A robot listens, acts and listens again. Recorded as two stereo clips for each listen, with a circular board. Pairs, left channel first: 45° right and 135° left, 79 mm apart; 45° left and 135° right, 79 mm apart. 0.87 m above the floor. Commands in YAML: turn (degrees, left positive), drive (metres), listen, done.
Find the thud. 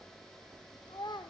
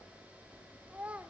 listen: true
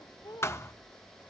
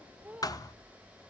turn: 10
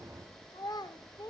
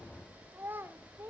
done: "Facing where the thud came from. I can't hear it now."